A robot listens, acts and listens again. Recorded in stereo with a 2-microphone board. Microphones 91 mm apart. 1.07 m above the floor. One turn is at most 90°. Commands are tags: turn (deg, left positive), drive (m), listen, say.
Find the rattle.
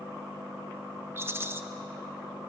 <turn deg="-25"/>
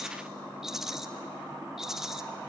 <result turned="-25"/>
<say>Found it: a rattle, straight ahead.</say>